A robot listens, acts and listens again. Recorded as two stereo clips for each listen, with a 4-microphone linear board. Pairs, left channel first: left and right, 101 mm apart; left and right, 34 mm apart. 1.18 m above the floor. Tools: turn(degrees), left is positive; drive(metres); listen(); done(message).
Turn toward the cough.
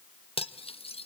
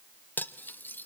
listen()
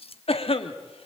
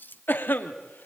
turn(degrees=70)
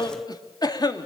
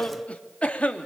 turn(degrees=40)
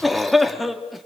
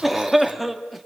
done("Found it: a cough, straight ahead.")